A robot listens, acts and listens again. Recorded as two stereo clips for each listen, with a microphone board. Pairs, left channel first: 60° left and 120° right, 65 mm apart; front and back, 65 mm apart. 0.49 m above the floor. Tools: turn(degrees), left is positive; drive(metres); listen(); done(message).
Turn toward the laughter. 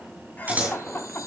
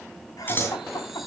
done("Facing the laughter.")